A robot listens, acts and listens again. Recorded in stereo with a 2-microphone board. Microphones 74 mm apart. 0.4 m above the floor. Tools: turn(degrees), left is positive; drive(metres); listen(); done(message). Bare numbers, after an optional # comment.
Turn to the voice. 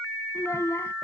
# The child speaking: about 40° left or 140° left.
turn(40)
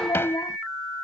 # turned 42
# So it is at 110° left.
turn(110)
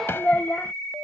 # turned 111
# The child speaking is now 25° left.
turn(25)
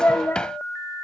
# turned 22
# The child speaking is now 35° left.
turn(35)
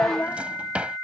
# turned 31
# The child speaking is now 30° left.
turn(30)
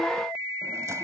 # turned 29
listen()
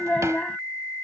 # The child speaking is now 15° left.
turn(15)
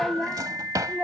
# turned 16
done("Facing the child speaking.")